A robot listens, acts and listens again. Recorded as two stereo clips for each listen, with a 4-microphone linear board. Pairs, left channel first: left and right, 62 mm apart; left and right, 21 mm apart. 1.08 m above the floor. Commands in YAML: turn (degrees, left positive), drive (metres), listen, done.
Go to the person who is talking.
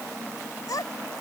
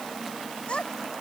turn: 90
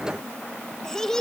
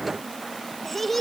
turn: 10
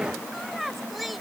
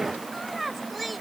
drive: 1.0
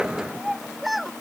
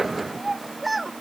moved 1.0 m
drive: 1.0
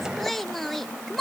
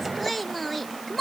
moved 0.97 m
drive: 1.0
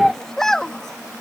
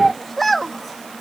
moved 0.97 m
turn: 10
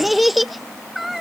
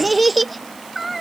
drive: 1.0
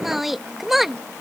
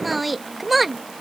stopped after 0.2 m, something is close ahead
done: "I am next to the child speaking."